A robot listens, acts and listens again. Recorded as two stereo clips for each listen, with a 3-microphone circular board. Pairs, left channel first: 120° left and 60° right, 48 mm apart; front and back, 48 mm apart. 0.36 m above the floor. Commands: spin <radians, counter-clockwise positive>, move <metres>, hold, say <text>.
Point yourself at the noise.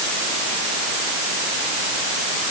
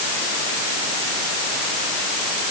hold
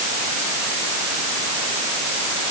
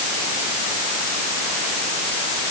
hold
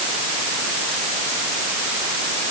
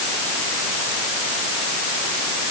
say I can't make out anything.